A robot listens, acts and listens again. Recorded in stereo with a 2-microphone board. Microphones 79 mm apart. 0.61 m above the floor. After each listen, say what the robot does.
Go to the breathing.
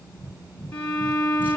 Turn 65° right.
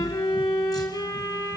Keep listening.
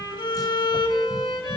Keep listening.
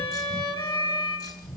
Drive 1.0 m forward.
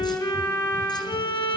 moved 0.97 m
Keep listening.
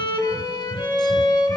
Keep listening.
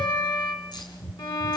Turn 10° left.
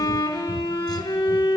Keep listening.
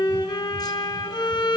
Keep listening.
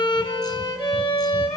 Facing where the breathing came from. I can't hear it now. I did not reach it.